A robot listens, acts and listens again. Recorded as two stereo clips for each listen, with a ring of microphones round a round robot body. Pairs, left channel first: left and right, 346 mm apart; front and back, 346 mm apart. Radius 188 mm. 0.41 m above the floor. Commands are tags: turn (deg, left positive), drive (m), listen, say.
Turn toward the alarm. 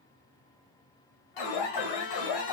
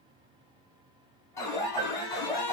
<turn deg="80"/>
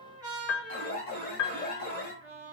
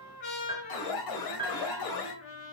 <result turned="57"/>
<turn deg="25"/>
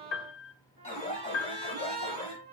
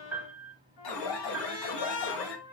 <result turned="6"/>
<turn deg="20"/>
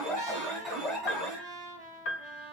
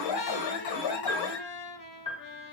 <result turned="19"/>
<say>Facing the alarm, 1 to 2 m away.</say>